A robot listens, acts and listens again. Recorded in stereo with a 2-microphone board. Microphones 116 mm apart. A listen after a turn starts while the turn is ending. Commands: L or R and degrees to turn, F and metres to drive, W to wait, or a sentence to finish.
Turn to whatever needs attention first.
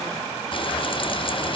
W
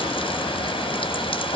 W
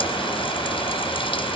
I can't make out anything urgent to turn to.